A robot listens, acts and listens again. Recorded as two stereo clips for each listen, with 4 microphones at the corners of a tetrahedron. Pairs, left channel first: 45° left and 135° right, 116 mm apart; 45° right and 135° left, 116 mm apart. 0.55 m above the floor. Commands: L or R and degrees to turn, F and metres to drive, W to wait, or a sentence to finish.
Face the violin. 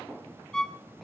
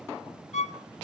R40
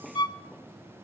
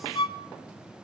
Facing the violin, under 1 m away.